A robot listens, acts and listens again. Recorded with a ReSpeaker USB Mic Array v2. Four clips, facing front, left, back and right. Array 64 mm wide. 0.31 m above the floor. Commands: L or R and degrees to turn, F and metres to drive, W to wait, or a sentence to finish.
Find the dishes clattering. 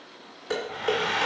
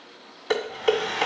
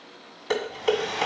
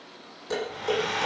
L120
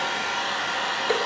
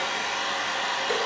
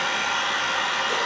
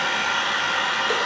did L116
W
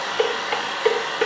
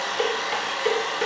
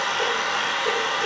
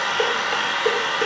Facing the dishes clattering, 1 to 2 m away.